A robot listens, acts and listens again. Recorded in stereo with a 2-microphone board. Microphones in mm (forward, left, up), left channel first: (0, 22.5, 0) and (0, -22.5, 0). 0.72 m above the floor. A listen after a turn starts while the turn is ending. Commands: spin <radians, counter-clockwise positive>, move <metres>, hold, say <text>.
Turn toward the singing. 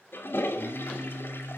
spin -1.57
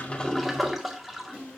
spin 0.52
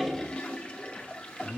spin 0.52
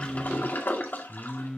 spin 0.35
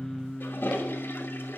say Found it: singing, straight ahead, 2 to 4 m away.